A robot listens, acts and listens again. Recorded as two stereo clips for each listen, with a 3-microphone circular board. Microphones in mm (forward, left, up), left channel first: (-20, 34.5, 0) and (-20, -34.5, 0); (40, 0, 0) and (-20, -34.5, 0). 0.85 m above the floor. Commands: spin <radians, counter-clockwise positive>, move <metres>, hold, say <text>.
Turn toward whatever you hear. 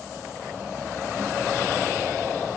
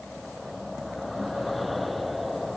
hold
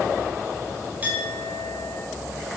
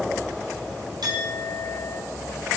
spin -2.62
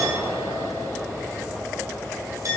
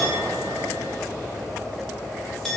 spin -0.96
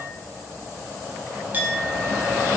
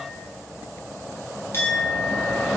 spin -0.44
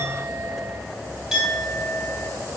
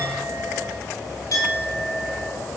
say Found it: a clink, straight ahead.